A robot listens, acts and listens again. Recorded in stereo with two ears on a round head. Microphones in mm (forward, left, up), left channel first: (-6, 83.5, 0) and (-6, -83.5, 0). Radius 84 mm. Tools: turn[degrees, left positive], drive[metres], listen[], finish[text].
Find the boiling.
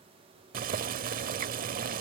Thought: The boiling: about 50° right or 130° right.
Action: turn[-50]
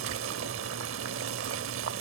Thought: So it is at 80° right.
Action: turn[-80]
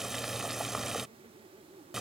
Action: finish[Facing the boiling.]